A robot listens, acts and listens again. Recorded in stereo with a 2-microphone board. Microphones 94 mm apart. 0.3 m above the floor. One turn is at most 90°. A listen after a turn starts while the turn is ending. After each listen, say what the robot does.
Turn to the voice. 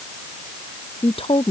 Turn 75° left.
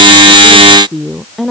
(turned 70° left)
Found it: a woman speaking, straight ahead.